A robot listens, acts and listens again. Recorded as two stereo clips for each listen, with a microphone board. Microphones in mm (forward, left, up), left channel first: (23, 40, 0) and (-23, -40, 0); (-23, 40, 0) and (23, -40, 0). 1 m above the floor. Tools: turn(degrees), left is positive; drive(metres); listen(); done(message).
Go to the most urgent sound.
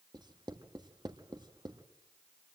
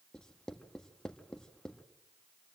listen()
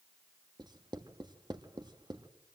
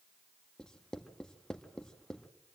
listen()
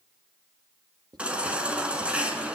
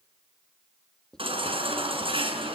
turn(degrees=-40)
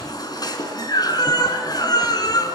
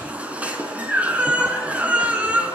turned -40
turn(degrees=15)
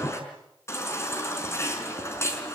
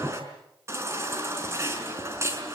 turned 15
drive(metres=1.0)
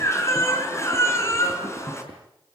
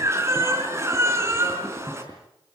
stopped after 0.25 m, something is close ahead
done("Something is in my way. I am facing the baby crying but have not reached it.")